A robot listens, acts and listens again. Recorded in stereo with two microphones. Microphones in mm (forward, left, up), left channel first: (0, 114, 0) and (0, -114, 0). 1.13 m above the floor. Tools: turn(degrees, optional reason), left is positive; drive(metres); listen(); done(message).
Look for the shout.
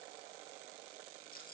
listen()
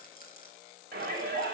turn(degrees=-45, reason="The shout: about 45° right or 135° right.")
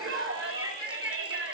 turn(degrees=-90, reason="So it is at 90° right.")
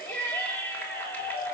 turn(degrees=10, reason="The shout is now 10° left.")
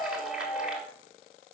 done("Facing the shout, 2 to 4 m away.")